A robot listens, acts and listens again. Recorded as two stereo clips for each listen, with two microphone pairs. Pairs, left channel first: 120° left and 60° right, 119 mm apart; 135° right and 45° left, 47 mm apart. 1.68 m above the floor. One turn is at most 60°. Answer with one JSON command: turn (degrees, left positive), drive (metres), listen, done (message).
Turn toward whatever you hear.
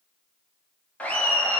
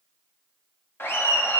{"turn": -60}
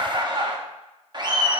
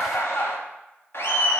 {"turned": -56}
{"turn": -60}
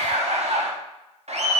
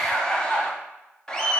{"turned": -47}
{"turn": -60}
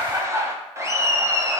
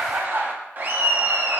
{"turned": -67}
{"done": "Found it: laughter, straight ahead."}